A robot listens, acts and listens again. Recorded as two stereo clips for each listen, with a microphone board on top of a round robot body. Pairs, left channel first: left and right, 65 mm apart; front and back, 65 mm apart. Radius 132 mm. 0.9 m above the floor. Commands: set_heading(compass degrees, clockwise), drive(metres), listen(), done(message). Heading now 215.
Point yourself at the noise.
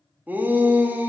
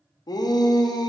set_heading(240)
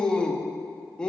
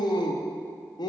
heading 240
set_heading(225)
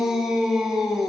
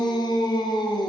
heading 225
done("Facing the shout.")